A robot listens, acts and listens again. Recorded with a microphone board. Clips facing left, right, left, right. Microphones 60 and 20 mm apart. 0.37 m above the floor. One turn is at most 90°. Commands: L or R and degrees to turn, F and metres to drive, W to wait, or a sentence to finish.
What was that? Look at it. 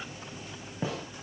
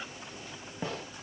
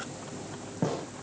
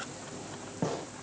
L30
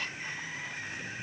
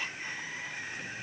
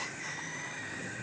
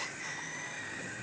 W
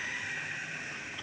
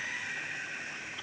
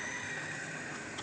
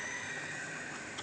I heard a gunshot, but can't make it out now. It was about 30° right or 150° left.